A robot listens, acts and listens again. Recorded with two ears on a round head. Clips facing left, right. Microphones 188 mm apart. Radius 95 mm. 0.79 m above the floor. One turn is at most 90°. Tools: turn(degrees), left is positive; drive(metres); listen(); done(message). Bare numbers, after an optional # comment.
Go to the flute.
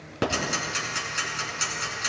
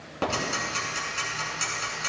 listen()
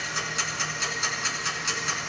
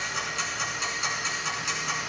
listen()
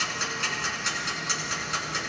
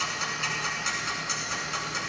done("I can't make out a flute, only ticking.")